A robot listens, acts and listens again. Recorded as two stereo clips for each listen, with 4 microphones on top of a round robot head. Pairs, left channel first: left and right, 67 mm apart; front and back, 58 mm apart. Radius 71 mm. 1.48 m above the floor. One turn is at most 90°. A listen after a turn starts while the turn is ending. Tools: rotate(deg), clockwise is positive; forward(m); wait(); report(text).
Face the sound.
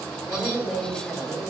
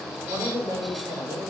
rotate(-90)
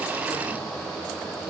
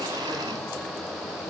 rotate(-85)
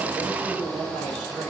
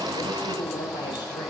report("Found it: a woman speaking, straight ahead.")